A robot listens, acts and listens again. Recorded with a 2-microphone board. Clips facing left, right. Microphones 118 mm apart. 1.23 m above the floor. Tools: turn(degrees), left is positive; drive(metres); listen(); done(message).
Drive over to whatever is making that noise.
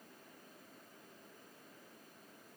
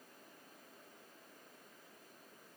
listen()
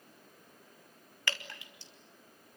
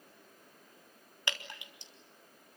turn(degrees=-20)
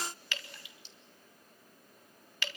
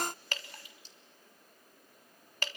turn(degrees=-135)
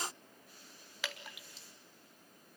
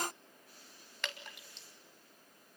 drive(metres=1.0)
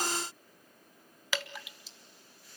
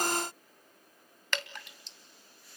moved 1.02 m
drive(metres=1.0)
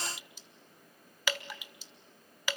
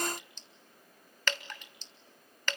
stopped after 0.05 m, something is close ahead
turn(degrees=10)
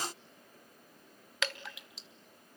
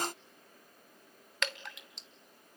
done("I am next to the dripping.")